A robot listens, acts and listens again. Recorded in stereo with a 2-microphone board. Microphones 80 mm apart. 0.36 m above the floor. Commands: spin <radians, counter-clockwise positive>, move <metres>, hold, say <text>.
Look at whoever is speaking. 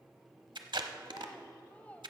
spin 0.35
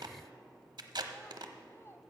spin 2.44
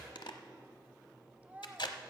spin -0.44
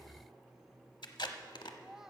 spin -0.17
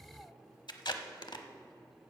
hold
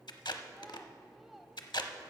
say Facing the child speaking, under 1 m away.